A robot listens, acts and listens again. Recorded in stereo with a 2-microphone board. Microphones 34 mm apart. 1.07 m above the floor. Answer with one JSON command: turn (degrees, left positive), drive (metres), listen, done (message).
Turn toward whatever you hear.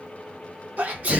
{"turn": -50}
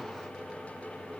{"listen": true}
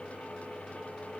{"done": "I heard a sneeze, but can't make it out now. It was about straight ahead or 80° right."}